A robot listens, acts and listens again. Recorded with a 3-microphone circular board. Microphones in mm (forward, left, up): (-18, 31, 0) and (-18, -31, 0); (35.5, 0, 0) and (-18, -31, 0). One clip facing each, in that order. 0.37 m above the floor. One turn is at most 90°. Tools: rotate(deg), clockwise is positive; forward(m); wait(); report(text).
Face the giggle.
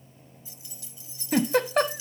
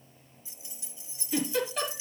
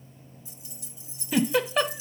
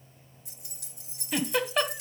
rotate(-90)
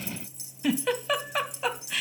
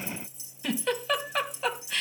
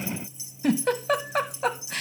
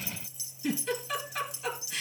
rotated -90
report("Found it: a giggle, straight ahead, 1 to 2 m away.")